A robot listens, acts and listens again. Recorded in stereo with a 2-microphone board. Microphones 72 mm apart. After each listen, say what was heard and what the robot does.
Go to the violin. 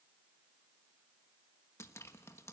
Keep listening.
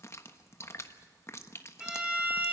Turn 30° right.
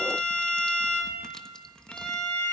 So it is at 15° left. Turn 15° left.
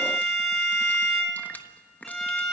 Drive 1.0 m forward.
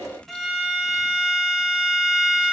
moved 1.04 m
Drive 1.0 m forward.
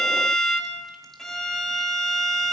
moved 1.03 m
Drive 1.0 m forward.
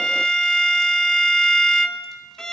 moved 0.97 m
The violin is now 10° left. Turn 10° left.
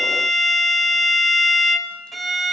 Drive 1.0 m forward.
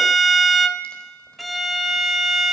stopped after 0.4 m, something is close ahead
I am next to the violin.